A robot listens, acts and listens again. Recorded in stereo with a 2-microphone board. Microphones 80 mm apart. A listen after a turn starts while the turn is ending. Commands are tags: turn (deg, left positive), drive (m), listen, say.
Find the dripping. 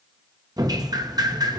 <turn deg="-50"/>
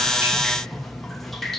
<say>Found it: dripping, straight ahead.</say>